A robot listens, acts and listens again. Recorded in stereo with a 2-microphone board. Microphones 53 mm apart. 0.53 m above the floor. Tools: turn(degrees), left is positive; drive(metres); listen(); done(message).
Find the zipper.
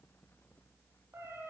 listen()
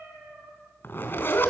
turn(degrees=45)
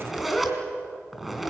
done("Found it: a zipper, straight ahead.")